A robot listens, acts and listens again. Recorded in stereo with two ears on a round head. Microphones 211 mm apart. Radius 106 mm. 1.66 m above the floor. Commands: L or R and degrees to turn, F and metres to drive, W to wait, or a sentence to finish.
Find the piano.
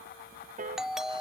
R35
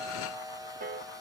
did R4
R35
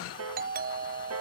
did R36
R105
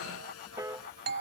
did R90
R15
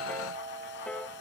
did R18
Facing the piano.